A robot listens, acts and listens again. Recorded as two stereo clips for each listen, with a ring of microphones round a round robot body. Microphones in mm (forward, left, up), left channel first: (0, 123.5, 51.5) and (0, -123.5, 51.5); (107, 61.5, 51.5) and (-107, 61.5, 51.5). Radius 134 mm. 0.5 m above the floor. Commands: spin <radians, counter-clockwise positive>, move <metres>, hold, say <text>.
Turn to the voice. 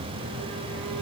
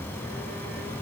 hold
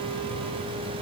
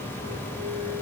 hold
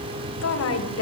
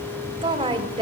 spin 2.01
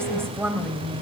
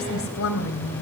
spin -0.17
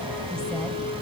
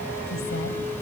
hold
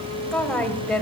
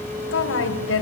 say Facing the woman speaking, 2 to 4 m away.